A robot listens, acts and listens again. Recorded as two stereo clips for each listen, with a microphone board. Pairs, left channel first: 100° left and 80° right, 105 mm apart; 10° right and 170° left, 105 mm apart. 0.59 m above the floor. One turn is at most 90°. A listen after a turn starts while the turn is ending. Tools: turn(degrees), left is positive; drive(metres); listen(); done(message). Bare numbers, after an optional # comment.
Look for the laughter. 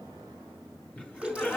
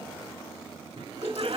# The laughter: straight behind.
turn(90)
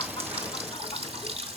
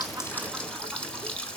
# Nothing new. It was at 90° left.
turn(90)
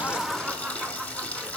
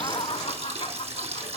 done("Facing the laughter, 1 to 2 m away.")